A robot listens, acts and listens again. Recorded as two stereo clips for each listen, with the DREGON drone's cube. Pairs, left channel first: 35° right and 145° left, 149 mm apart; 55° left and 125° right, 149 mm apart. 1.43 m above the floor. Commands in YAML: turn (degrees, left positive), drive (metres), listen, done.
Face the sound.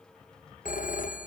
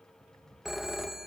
turn: -35
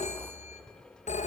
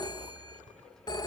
done: "Found it: a phone ringing, straight ahead, under 1 m away."